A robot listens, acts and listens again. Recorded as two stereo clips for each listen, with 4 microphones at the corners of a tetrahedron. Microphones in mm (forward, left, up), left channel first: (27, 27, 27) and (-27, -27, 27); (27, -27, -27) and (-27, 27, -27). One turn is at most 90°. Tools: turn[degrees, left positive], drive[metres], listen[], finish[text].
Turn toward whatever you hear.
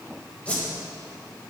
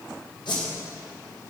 Thought: The whoosh: 30° right.
Action: turn[-30]
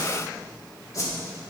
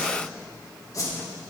Action: finish[Found it: a whoosh, straight ahead, 1 to 2 m away.]